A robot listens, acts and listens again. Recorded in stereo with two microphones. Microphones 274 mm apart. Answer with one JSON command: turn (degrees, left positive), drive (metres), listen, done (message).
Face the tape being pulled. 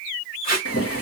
{"turn": 35}
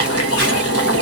{"listen": true}
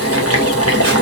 {"listen": true}
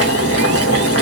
{"done": "I heard tape being pulled, but can't make it out now. It was about straight ahead or 110° left."}